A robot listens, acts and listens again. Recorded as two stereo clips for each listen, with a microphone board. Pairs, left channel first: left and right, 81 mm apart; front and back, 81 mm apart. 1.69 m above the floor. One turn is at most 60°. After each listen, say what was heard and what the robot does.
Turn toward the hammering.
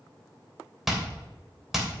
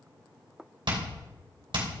The hammering: 175° right. Turn 60° right.
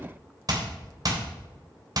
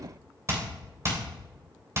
The hammering is now 125° right. Turn 60° right.
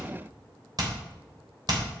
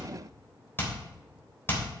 The hammering is now 60° right. Turn 60° right.
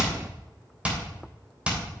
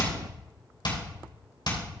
The hammering is now 15° right. Turn 15° right.
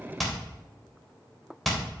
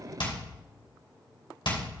Facing the hammering.